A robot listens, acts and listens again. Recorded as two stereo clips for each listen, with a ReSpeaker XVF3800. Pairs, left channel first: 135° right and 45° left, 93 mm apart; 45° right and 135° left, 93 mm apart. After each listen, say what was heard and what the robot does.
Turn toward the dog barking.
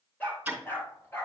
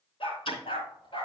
The dog barking: 70° right. Turn 70° right.
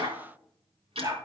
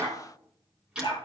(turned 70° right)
The dog barking is now 15° right. Turn 15° right.
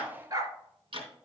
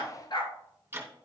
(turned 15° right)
Facing the dog barking, 1 to 2 m away.